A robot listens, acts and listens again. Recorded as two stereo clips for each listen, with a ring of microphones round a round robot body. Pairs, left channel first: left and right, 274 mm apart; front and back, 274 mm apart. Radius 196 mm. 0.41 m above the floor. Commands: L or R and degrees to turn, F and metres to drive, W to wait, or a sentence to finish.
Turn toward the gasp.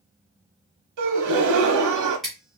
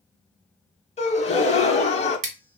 R70
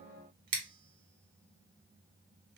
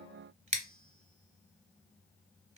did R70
I heard a gasp from this way, but can't make it out now.